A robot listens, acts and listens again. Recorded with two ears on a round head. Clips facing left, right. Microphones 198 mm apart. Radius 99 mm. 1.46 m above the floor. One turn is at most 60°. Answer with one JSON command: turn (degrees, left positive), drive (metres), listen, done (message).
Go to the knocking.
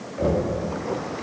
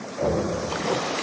{"turn": 20}
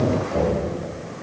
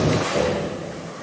{"drive": 1.0}
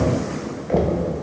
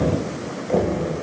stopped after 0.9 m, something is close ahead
{"done": "I am next to the knocking."}